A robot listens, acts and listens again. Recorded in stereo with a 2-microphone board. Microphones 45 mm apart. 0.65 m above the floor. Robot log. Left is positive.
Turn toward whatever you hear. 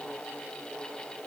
cmd idle
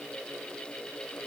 cmd idle
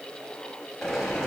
cmd yaw +30
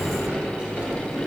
note: So it is at 30° right.
cmd yaw -30
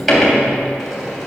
end: Found it: a sliding door, straight ahead, 2 to 4 m away.